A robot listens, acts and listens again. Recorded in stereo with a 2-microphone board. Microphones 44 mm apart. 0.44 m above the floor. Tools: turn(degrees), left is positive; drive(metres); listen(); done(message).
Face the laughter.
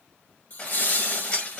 turn(degrees=50)
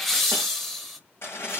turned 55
done("Found it: laughter, straight ahead.")